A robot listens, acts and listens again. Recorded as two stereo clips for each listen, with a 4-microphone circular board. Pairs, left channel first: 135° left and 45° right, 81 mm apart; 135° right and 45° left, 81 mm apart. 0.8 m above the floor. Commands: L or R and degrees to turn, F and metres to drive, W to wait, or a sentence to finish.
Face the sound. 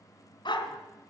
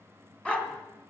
L150
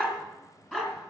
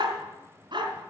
L55
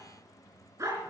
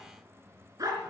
L10
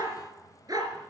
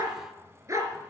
Facing the dog barking.